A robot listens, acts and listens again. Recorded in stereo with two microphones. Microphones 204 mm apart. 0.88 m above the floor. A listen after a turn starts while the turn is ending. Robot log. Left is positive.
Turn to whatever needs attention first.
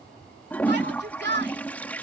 note: The shout: about 55° right or 125° right.
cmd yaw -55
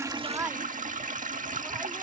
cmd idle
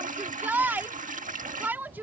note: So it is at 10° right.
cmd yaw -10
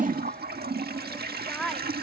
end: Found it: a shout, straight ahead.